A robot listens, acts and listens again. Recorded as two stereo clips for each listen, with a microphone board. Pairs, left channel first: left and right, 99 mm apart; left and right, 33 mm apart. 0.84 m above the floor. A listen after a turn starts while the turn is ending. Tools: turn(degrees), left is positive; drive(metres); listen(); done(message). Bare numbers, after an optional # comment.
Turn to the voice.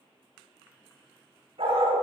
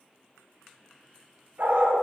listen()
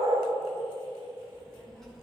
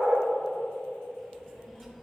turn(30)
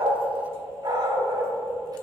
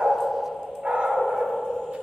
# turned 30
listen()
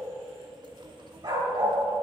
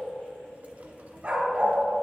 # So it is at 50° right.
turn(-50)
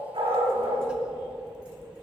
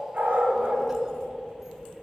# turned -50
# The child speaking is now 10° right.
turn(-10)
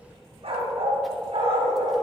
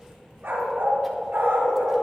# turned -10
done("Found it: a child speaking, straight ahead.")